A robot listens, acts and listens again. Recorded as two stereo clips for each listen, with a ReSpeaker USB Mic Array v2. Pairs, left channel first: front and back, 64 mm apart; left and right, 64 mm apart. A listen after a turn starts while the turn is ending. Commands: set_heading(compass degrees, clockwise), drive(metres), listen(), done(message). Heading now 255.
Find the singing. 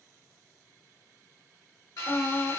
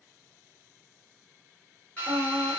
set_heading(300)
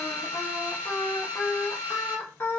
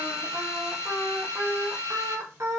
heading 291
set_heading(346)
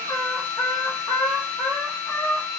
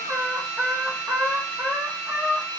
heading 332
set_heading(17)
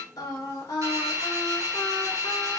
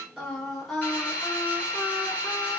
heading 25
set_heading(15)
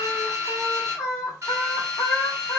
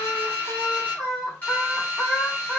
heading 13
done("Facing the singing.")